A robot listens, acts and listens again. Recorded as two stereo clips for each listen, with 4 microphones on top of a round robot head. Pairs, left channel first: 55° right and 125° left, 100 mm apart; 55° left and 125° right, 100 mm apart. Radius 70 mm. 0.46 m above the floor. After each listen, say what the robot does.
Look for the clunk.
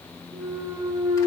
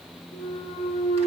Turn 80° left.
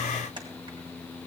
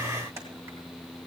Facing where the clunk came from. I can't hear it now.